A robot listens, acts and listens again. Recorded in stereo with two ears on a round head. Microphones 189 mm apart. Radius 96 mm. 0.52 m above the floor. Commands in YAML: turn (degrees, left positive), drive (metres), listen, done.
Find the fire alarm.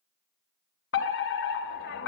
turn: 60
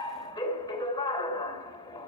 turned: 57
turn: 20
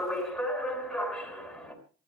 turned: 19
done: "Found it: a fire alarm, straight ahead."